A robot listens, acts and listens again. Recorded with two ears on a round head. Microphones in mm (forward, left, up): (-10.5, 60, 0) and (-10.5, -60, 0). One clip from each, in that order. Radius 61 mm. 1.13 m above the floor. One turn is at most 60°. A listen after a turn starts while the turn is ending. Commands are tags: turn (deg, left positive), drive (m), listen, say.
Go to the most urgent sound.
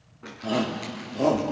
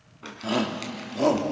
<turn deg="-40"/>
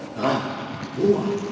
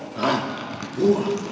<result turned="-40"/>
<turn deg="-60"/>
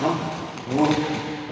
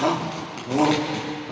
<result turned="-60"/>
<turn deg="-30"/>
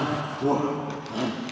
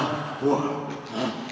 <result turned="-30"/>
<drive m="1.0"/>
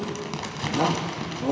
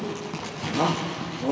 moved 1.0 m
<drive m="1.0"/>
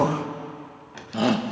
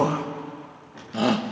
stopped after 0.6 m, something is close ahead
<say>Arrived at the shout, straight ahead.</say>